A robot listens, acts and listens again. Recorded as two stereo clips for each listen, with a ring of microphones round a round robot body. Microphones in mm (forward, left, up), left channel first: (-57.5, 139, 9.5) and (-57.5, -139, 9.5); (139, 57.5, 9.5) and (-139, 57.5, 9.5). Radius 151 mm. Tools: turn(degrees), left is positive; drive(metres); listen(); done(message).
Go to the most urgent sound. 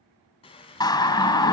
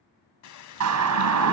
turn(degrees=165)
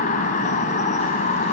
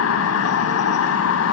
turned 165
turn(degrees=25)
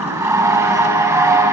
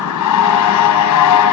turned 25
turn(degrees=-10)
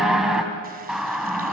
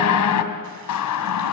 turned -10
drive(metres=1.0)
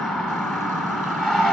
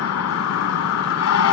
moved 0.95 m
drive(metres=1.0)
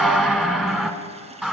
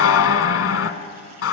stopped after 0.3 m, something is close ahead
done("I am next to the siren.")